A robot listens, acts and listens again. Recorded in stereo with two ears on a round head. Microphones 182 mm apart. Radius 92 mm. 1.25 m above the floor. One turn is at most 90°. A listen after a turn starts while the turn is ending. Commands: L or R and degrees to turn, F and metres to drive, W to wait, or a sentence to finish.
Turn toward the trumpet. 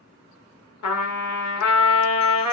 L90
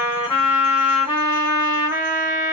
R10
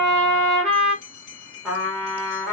Found it: a trumpet, straight ahead.